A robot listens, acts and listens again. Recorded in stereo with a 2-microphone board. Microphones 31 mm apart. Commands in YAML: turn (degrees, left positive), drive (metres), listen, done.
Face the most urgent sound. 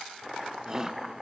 turn: -25
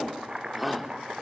done: "Found it: a shout, straight ahead."